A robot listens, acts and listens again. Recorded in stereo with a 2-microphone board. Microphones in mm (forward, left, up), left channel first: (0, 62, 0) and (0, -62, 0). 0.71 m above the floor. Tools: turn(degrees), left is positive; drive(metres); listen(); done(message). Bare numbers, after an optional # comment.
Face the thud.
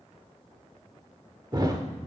# The thud: about 35° right or 145° right.
turn(-35)
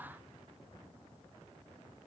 listen()
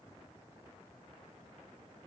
done("I heard a thud, but can't make it out now. It was about straight ahead or 110° right.")